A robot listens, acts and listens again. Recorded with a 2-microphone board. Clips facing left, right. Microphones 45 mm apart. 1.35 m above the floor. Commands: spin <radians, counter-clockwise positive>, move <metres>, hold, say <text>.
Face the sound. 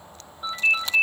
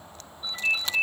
spin 1.31
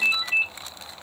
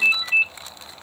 say Facing the ringtone.